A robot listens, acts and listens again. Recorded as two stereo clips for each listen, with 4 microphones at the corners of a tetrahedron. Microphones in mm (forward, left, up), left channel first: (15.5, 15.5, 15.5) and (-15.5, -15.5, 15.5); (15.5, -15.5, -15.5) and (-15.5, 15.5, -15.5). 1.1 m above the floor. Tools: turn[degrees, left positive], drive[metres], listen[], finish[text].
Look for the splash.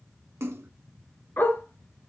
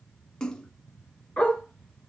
Thought: The splash: 115° right.
Action: turn[-115]
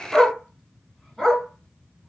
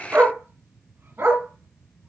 Action: finish[I heard a splash from this way, but can't make it out now.]